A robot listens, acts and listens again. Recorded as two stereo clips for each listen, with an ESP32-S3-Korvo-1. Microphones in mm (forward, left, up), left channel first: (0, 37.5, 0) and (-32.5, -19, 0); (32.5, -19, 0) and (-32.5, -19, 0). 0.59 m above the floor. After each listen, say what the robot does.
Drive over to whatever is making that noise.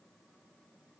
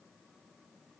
Keep listening.
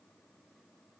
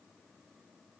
Keep listening.
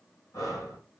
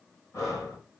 Turn 35° left.
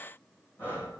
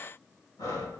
Drive 1.0 m forward.
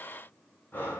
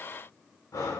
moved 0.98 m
Drive 1.0 m forward.
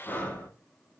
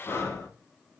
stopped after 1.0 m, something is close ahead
Turn 10° left.
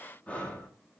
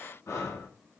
Arrived at the breathing, straight ahead.